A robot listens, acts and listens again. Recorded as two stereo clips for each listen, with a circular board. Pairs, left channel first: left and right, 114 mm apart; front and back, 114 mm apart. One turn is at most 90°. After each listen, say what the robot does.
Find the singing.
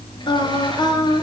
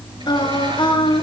Turn 40° left.
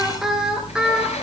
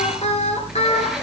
Facing the singing.